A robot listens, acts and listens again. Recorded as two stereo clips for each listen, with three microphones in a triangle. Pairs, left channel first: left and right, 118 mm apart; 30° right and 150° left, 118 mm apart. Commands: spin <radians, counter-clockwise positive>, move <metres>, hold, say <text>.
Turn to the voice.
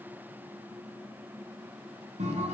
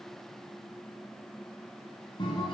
hold
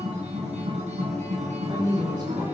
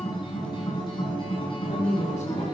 spin -0.61
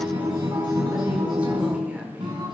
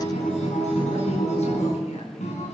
hold
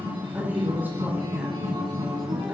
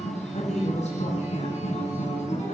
spin -0.26
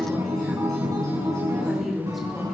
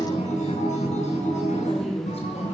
say Found it: a woman speaking, straight ahead.